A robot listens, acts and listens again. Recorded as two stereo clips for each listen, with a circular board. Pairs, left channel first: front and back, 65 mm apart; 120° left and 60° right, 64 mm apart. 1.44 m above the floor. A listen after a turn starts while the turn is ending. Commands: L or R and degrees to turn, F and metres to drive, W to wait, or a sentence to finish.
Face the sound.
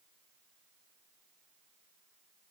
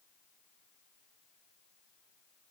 W
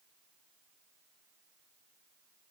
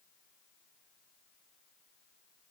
W
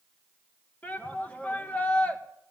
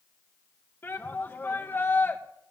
L65
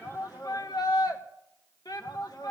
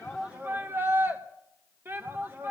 Facing the shout.